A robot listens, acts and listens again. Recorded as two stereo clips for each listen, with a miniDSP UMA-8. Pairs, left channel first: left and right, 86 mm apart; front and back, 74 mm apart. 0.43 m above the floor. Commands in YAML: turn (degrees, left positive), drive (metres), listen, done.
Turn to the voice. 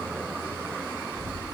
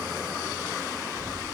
turn: 25
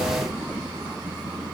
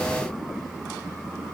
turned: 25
listen: true
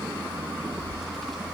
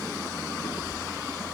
done: "Found it: a child speaking, straight ahead, over 4 m away."